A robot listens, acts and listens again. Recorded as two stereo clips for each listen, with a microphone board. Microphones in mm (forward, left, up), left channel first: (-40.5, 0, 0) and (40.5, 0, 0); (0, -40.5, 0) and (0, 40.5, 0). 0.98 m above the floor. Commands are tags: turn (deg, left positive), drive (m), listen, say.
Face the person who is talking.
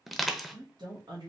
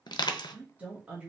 <turn deg="20"/>
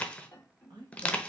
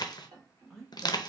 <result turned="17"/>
<say>Found it: a woman speaking, straight ahead, 1 to 2 m away.</say>